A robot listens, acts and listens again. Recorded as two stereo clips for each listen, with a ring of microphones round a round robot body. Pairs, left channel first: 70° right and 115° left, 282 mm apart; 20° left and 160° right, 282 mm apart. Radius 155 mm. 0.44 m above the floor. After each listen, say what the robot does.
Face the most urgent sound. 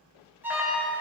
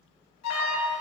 Turn 30° left.
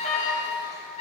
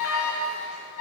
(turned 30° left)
Facing the alarm.